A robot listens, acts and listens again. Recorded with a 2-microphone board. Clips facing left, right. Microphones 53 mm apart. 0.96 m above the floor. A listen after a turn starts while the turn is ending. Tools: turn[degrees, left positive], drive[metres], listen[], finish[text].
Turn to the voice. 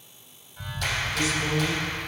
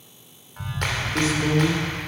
Thought: The man speaking: about 35° right or 145° right.
Action: turn[-35]
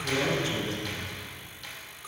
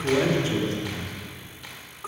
Thought: So it is at 110° right.
Action: turn[-110]
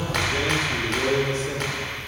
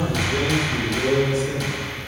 Thought: The man speaking is now 40° left.
Action: turn[40]
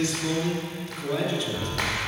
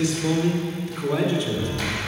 Thought: The man speaking is now 10° right.
Action: turn[-10]
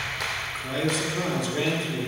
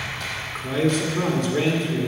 Action: finish[Found it: a man speaking, straight ahead.]